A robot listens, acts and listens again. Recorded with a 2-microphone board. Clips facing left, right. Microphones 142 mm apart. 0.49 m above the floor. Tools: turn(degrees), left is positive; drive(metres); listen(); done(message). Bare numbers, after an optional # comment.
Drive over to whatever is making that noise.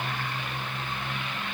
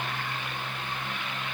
listen()
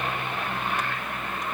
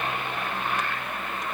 listen()
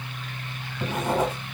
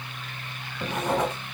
turn(30)
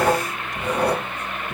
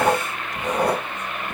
# So it is at 25° right.
turn(-25)
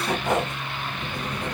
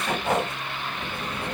# The writing is now 10° right.
turn(-10)
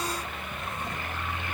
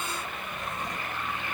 listen()
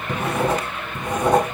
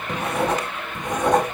drive(1.0)
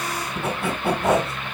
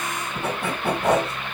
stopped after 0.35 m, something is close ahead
done("Something is in my way. I am facing the writing but have not reached it.")